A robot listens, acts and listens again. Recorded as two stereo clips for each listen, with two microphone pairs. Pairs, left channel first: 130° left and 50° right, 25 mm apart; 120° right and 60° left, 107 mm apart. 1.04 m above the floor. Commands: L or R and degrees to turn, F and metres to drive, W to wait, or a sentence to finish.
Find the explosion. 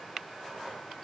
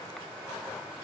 W
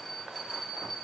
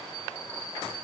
W
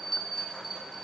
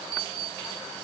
I can't make out an explosion, only a bell.